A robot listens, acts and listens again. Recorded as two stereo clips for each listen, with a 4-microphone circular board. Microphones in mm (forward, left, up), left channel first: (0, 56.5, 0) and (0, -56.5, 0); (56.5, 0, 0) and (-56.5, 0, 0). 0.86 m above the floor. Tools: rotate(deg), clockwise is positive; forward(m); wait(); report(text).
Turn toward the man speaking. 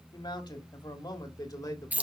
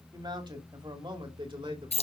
rotate(-145)
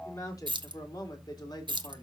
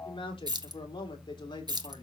rotate(-40)
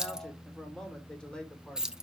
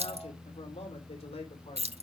rotate(-10)
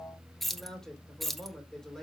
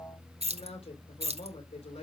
wait()
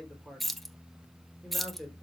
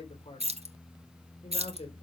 report("Found it: a man speaking, straight ahead, 2 to 4 m away.")